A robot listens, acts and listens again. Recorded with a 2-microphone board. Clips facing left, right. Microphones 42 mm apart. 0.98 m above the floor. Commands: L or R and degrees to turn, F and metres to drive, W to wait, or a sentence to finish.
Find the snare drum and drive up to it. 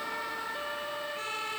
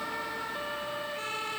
W
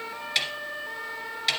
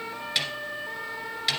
L30
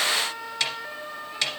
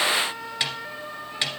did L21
R20
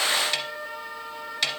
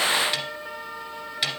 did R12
F1.0
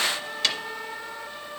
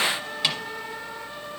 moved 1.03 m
R10
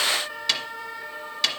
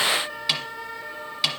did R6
F1.0
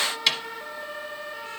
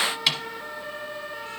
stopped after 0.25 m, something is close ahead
Arrived at the snare drum, straight ahead.